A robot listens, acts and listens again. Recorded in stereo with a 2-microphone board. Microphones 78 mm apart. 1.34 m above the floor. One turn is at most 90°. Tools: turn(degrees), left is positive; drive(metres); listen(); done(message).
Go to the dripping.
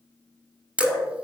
turn(degrees=30)
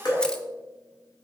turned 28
turn(degrees=90)
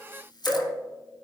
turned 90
turn(degrees=30)
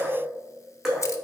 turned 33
drive(metres=1.0)
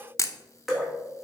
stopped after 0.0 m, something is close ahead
done("Blocked. The dripping is further on, straight ahead.")